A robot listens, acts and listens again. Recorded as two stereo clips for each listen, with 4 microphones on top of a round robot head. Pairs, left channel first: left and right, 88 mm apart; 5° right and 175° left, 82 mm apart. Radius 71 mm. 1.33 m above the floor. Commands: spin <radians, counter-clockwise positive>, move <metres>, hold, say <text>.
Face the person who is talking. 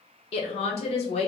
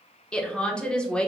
spin 1.22
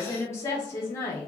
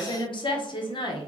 spin 0.35
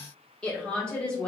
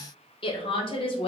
spin 0.17
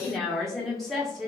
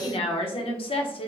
say Found it: a woman speaking, straight ahead.